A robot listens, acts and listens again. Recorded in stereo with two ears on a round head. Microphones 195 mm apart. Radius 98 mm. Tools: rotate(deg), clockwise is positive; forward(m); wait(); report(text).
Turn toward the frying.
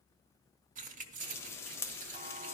rotate(-30)
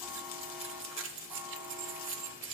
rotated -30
rotate(-140)
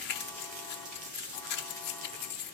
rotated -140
rotate(35)
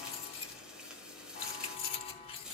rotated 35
report("Facing the frying, 1 to 2 m away.")